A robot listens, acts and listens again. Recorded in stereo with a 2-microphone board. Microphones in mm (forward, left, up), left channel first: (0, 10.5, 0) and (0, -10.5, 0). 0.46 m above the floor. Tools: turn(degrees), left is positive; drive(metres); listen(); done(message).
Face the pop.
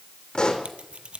turn(degrees=45)
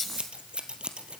listen()
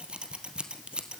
done("I heard a pop, but can't make it out now. It was about straight ahead or 90° left.")